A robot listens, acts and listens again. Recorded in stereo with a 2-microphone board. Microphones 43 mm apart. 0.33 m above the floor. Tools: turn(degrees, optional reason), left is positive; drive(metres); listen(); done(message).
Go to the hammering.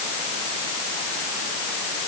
listen()
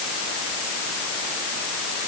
listen()
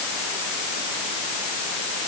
done("I can't make out hammering.")